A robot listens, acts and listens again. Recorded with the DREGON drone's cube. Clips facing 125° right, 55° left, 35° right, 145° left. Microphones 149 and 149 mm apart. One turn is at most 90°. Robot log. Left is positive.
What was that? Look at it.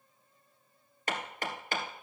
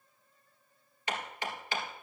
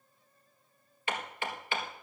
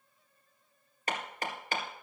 note: The hammering: 165° right.
cmd yaw -90
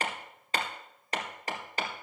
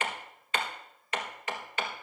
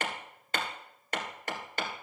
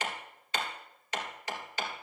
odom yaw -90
note: The hammering is now 70° right.
cmd yaw -70
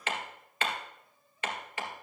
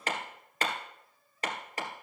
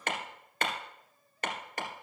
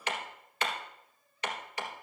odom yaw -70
end: Facing the hammering, 1 to 2 m away.